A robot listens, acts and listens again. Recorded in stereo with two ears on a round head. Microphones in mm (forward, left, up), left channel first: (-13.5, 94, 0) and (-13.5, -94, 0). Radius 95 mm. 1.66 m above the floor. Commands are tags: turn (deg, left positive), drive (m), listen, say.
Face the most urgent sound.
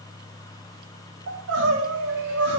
<turn deg="-70"/>
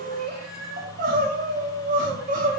<turn deg="-40"/>
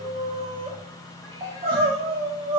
<turn deg="-25"/>
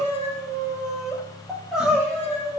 <say>Facing the crying, 1 to 2 m away.</say>